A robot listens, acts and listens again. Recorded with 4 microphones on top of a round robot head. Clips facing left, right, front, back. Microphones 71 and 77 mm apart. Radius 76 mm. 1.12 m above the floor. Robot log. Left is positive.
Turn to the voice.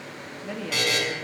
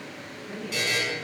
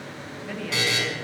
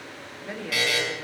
note: The woman speaking: 110° left.
cmd yaw +110
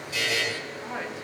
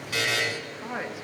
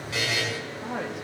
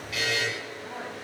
note: The woman speaking is now 15° right.
cmd yaw -15
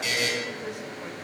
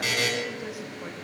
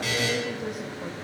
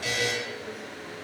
cmd idle
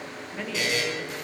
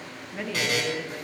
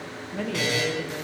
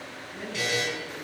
end: Found it: a woman speaking, straight ahead.